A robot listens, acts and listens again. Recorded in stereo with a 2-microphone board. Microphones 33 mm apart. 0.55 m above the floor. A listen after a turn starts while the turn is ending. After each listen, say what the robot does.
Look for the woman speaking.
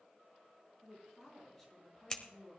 Turn 30° left.
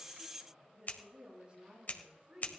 Turn 35° right.
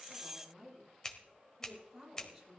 Turn 10° right.
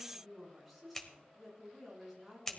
Facing the woman speaking.